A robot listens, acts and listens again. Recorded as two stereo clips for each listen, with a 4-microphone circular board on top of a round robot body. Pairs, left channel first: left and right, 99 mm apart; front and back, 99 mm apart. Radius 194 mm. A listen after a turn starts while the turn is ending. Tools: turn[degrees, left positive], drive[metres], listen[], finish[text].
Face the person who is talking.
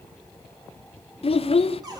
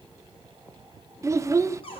Thought: The child speaking: 120° left.
Action: turn[120]
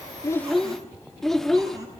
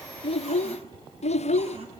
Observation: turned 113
Action: finish[Found it: a child speaking, straight ahead.]